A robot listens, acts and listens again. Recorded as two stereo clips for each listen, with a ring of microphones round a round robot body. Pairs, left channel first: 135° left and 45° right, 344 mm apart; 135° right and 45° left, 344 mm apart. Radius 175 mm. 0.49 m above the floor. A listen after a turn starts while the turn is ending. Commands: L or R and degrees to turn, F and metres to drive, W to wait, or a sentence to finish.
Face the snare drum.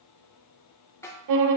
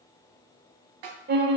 L55
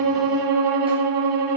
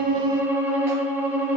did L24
L30
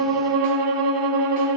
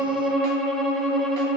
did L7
L20
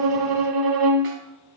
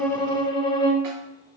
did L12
L10
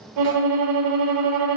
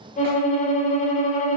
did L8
Facing where the snare drum came from. I can't hear it now.